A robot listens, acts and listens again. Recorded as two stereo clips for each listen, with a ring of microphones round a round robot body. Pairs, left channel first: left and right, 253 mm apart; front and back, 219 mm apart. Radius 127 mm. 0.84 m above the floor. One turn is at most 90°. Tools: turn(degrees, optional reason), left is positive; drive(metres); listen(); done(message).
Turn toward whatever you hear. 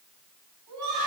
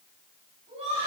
turn(degrees=-90, reason="The laughter: 110° right.")
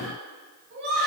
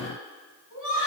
turn(degrees=-40, reason="The laughter is now 40° right.")
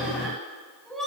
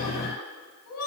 done("Found it: laughter, straight ahead.")